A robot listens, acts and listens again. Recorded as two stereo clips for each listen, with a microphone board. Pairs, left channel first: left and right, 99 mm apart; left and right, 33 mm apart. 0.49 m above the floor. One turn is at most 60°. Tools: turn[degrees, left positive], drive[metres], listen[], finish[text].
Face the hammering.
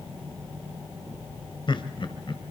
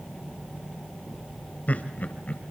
Action: listen[]
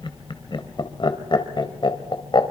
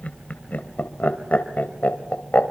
Action: listen[]
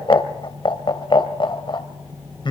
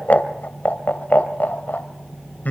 Action: finish[I can't make out hammering, only laughter.]